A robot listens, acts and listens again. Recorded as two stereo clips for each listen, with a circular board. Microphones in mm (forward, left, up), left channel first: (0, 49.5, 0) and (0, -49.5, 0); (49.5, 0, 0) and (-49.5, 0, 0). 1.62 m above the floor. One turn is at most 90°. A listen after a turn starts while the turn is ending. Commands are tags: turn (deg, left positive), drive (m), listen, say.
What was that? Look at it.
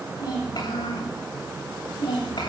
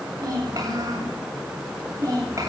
<turn deg="90"/>
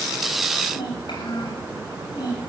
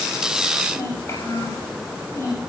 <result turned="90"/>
<turn deg="55"/>
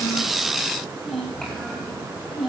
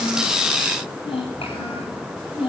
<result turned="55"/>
<say>Facing the child speaking, over 4 m away.</say>